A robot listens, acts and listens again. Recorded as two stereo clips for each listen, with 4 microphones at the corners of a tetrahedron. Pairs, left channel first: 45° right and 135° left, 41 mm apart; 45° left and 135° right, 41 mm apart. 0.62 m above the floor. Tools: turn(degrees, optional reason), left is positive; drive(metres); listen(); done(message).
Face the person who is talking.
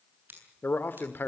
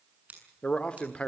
turn(degrees=-15, reason="The man speaking: 15° right.")
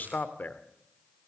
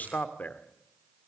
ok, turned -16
done("Facing the man speaking.")